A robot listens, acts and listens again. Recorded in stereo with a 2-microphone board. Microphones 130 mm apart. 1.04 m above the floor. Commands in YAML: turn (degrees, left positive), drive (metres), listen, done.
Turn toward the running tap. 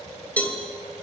listen: true
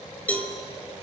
listen: true
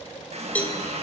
turn: -55
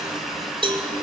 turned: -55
done: "Facing the running tap, over 4 m away."